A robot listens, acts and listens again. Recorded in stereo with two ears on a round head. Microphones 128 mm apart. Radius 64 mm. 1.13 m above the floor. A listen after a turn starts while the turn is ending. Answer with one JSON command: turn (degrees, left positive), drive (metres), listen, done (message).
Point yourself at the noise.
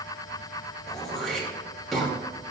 {"turn": 30}
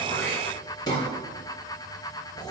{"turn": 145}
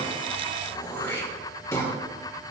{"turn": 20}
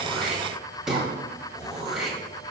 {"done": "Found it: throat clearing, straight ahead, 2 to 4 m away."}